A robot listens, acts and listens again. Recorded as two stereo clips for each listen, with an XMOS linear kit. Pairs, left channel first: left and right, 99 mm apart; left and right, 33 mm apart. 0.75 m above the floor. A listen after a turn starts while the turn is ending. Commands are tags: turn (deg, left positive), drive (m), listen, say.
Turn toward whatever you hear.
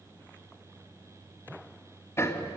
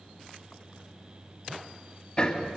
<turn deg="25"/>
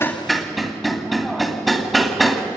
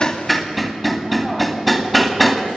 <say>Found it: hammering, straight ahead, 2 to 4 m away.</say>